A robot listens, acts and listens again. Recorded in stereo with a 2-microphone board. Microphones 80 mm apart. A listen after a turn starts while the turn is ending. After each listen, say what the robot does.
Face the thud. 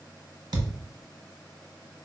Turn 60° right.
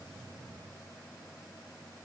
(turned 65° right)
Keep listening.
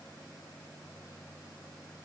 I heard a thud, but can't make it out now. It was about 5° left or 55° right.